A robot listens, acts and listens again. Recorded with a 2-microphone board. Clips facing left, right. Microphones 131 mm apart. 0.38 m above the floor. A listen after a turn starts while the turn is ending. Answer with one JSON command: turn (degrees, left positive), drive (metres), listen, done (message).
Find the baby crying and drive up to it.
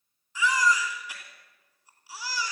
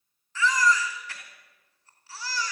{"turn": 30}
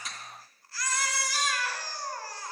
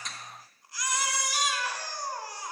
{"turn": -20}
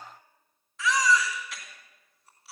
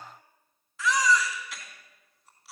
{"drive": 1.0}
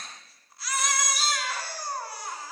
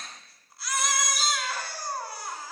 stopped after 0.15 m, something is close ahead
{"done": "Blocked. The baby crying is further on, straight ahead."}